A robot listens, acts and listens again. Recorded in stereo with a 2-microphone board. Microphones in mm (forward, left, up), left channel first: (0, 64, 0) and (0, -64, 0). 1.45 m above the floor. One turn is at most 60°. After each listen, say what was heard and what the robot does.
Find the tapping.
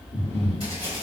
The tapping: about 45° right or 135° right. Turn 45° right.
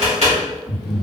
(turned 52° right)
So it is at 80° right. Turn 60° right.
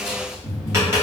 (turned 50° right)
The tapping is now 25° right. Turn 25° right.
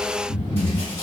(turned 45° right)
Nothing new. It was at 20° left. Turn 20° left.
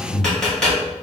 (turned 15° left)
Facing the tapping, 1 to 2 m away.